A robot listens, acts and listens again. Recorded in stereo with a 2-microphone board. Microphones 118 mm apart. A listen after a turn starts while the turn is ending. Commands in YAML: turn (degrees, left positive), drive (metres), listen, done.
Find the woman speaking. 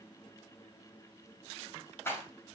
listen: true
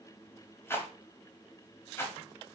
listen: true
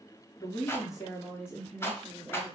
turn: 30
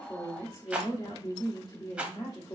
turn: 140
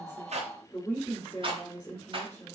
turn: 20
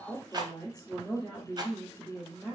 done: "Facing the woman speaking, 2 to 4 m away."